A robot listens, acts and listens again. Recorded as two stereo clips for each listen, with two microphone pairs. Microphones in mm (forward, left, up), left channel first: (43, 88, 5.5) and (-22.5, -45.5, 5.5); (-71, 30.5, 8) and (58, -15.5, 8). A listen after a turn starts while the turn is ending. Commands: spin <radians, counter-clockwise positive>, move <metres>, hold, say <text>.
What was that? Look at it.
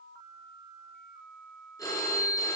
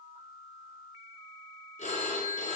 spin 2.27
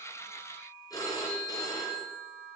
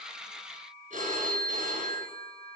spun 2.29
say Facing the phone ringing, 2 to 4 m away.